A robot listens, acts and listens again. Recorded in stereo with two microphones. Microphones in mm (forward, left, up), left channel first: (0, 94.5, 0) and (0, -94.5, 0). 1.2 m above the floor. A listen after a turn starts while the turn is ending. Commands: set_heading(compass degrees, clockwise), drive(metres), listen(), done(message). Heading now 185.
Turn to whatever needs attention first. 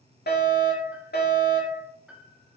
set_heading(120)
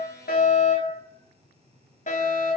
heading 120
set_heading(70)
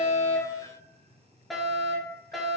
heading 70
done("Found it: a fire alarm, straight ahead.")